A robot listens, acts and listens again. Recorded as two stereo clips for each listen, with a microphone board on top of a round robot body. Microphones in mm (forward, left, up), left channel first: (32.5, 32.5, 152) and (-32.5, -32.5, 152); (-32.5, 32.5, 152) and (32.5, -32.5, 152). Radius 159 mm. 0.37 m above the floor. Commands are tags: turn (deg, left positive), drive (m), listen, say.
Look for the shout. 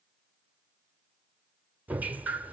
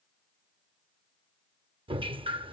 <listen/>
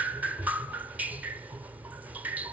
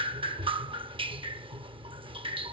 <listen/>
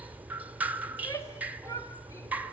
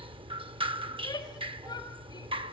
<turn deg="100"/>
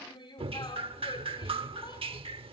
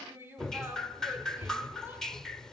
<turn deg="20"/>
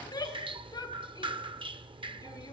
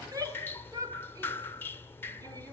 <say>Facing the shout.</say>